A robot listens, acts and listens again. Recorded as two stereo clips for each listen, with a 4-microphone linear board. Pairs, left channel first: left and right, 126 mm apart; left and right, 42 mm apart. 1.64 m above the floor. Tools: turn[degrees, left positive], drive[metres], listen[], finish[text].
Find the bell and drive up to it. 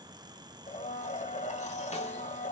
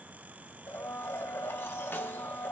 Action: listen[]
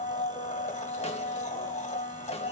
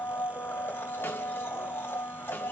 Action: listen[]
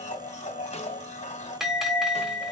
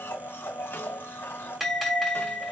Action: turn[-30]
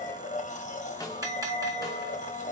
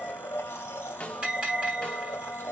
Thought: So it is at 145° right.
Action: turn[-145]
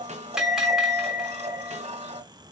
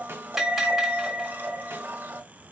Action: drive[1.0]
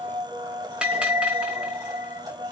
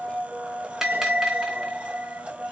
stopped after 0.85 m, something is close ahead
Thought: The bell is now 10° right.
Action: turn[-10]
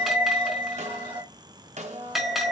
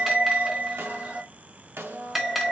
Action: finish[I am next to the bell.]